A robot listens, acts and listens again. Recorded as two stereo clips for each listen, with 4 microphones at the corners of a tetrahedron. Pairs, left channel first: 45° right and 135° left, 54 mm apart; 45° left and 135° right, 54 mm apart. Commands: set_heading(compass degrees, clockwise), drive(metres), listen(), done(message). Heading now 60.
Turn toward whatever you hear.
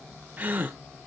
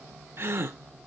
set_heading(230)
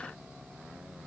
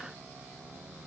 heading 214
set_heading(229)
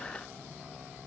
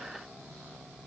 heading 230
done("I heard a gasp from this way, but can't make it out now.")